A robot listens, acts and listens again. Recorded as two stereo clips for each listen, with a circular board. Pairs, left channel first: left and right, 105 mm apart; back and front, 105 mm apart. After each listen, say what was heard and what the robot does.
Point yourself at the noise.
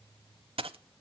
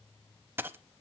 The dropped coin: 70° right. Turn 70° right.
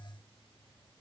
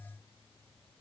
I heard a dropped coin from this way, but can't make it out now.